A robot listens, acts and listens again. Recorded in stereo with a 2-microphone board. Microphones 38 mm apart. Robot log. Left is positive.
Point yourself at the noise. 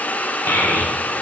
note: The child speaking: about 65° left or 115° left.
cmd yaw +65
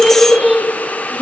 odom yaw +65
end: Facing the child speaking, 1 to 2 m away.